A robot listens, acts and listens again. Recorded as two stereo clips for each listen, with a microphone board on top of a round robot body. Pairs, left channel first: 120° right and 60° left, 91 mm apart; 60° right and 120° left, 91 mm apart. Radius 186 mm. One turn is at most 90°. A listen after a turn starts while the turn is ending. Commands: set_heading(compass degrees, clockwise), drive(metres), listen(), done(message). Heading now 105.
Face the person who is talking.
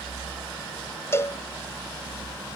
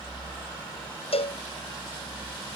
listen()
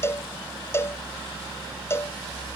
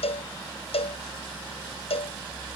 listen()
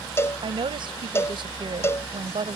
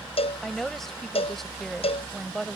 set_heading(75)
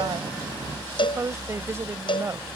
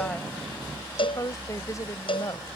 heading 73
done("Facing the woman speaking.")